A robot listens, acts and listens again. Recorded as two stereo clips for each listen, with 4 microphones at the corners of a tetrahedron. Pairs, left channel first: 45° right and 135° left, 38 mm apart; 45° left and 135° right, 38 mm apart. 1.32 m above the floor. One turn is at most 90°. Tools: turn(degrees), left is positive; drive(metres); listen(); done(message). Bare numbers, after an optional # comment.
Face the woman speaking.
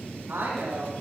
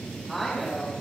# The woman speaking: 130° left.
turn(90)
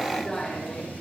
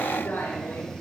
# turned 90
# The woman speaking is now 25° left.
turn(25)
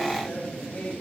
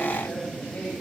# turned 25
listen()
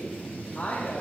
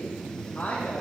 done("Facing the woman speaking.")